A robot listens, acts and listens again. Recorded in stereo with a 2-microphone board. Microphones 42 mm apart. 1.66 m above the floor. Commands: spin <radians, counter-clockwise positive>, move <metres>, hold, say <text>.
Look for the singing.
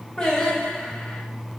spin 0.35
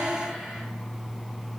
say Facing the singing, 1 to 2 m away.